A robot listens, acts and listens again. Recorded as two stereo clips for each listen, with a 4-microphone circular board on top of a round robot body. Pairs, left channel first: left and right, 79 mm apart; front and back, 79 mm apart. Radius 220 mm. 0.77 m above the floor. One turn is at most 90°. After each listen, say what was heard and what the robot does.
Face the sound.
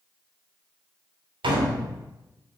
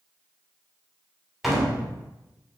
The door slam: 95° right. Turn 90° right.
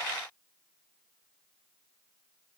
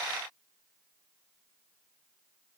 I heard a door slam from this way, but can't make it out now.